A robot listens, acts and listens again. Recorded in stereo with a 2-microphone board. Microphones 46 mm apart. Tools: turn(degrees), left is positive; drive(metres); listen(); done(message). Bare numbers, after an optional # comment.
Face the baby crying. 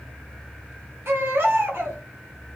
# The baby crying: about 60° right or 120° right.
turn(-60)
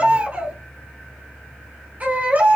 # So it is at 40° right.
turn(-40)
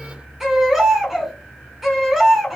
# The baby crying is now 10° right.
turn(-10)
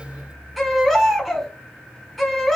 done("Facing the baby crying.")